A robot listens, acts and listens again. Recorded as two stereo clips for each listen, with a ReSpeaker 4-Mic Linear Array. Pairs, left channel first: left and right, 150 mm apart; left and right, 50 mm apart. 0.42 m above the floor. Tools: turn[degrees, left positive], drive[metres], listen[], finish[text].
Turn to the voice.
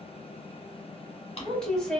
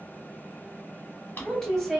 Action: turn[30]
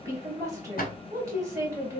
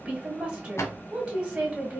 Thought: So it is at 25° right.
Action: turn[-25]
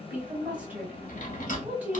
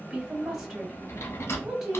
Thought: The woman speaking is now 10° right.
Action: turn[-10]
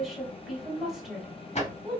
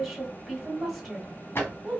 Action: finish[Facing the woman speaking, 1 to 2 m away.]